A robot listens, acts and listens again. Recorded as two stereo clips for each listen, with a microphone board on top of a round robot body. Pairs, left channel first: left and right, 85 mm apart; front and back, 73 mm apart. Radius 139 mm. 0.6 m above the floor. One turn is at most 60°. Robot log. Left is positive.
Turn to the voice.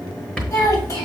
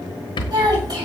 note: The child speaking: 140° left.
cmd yaw +60
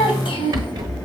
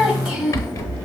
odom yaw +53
note: The child speaking is now 85° left.
cmd yaw +60
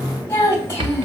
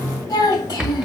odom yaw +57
note: The child speaking is now 30° left.
cmd yaw +30
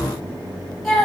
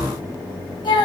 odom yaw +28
end: Found it: a child speaking, straight ahead, 2 to 4 m away.